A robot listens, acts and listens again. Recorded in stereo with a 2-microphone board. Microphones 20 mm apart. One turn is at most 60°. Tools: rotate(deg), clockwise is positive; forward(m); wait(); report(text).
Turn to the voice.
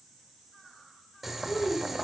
rotate(-60)
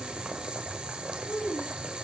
rotate(-55)
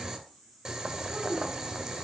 rotate(10)
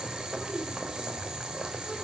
wait()
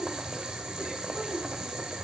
report("Facing the child speaking.")